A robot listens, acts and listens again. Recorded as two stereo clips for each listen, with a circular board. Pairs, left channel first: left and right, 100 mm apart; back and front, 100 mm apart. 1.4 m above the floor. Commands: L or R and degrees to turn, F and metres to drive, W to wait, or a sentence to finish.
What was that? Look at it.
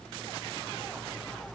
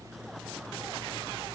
W
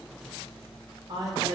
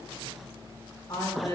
R130
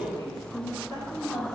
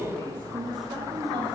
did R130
L40
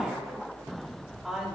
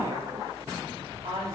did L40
Facing the woman speaking, 2 to 4 m away.